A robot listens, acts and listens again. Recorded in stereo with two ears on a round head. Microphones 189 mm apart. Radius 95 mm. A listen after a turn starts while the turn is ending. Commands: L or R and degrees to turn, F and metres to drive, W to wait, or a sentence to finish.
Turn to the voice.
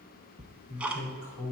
L60
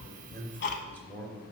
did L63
L10
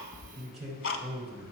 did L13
Found it: a man speaking, straight ahead.